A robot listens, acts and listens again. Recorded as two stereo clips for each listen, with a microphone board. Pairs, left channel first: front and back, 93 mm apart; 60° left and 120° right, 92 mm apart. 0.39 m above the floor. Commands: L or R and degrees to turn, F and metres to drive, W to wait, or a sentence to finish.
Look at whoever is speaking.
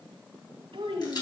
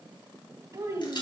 R170
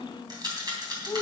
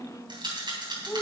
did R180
L10
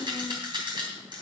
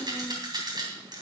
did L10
Found it: a child speaking, straight ahead, 2 to 4 m away.